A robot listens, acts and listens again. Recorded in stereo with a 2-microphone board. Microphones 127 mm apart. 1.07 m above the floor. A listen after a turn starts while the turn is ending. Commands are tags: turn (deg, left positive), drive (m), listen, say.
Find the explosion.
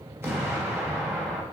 <turn deg="-20"/>
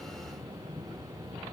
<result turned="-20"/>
<listen/>
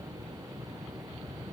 <say>I heard an explosion, but can't make it out now. It was about straight ahead or 140° right.</say>